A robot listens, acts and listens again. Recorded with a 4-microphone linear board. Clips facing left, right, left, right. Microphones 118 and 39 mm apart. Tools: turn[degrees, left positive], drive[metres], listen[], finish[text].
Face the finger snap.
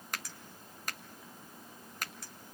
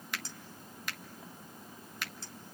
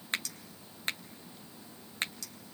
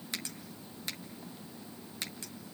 Thought: The finger snap: about 40° left or 140° left.
Action: turn[40]
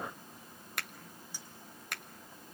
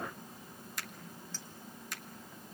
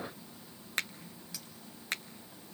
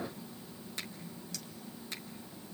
Thought: So it is at 90° left.
Action: turn[90]
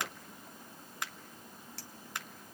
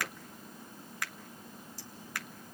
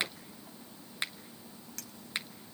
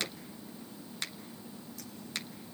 Thought: The finger snap is now 25° left.
Action: turn[25]
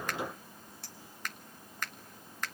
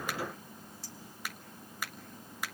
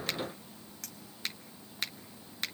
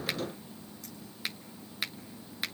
Thought: The finger snap is now 10° right.
Action: turn[-10]
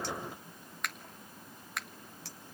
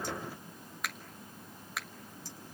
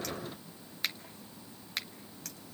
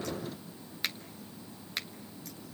Action: finish[Facing the finger snap, 1 to 2 m away.]